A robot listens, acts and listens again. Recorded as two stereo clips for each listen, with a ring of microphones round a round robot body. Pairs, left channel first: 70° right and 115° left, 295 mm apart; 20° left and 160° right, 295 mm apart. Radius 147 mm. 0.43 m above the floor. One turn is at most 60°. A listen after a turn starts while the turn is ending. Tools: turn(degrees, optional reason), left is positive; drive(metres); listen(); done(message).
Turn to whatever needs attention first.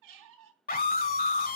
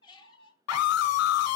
turn(degrees=-10, reason="The scream: 10° right.")
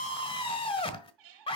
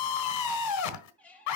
done("Facing the scream, 1 to 2 m away.")